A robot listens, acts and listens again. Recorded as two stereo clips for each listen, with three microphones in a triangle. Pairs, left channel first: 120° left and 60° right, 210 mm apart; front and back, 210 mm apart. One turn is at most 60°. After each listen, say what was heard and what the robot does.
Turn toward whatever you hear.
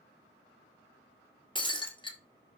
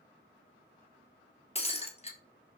The breaking glass: 55° left. Turn 55° left.
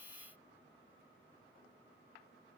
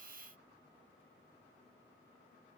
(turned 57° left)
I heard breaking glass from this way, but can't make it out now.